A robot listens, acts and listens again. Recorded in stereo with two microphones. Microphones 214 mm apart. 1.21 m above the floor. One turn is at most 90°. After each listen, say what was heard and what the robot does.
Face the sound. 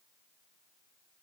Keep listening.
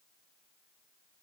Keep listening.
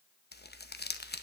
The crumpling: about 50° left or 130° left. Turn 50° left.
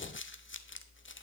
So it is at 75° left. Turn 75° left.
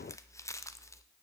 The crumpling is now 15° left. Turn 15° left.
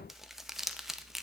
Found it: crumpling, straight ahead.